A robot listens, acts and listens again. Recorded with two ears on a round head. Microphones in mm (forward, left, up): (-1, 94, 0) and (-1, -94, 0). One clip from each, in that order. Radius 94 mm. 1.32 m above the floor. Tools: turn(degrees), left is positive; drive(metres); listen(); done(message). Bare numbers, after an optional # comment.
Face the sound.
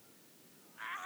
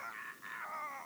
listen()
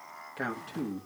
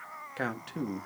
# The man speaking: about 20° right or 160° right.
turn(-20)
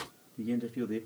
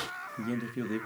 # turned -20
# The man speaking: about 20° right or 160° right.
turn(-20)
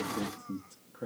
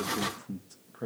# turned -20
# The man speaking: about 25° right or 155° right.
turn(-25)
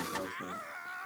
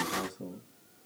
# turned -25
# So it is at 140° right.
turn(-140)
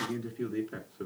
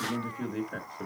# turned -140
done("Found it: a man speaking, straight ahead, 1 to 2 m away.")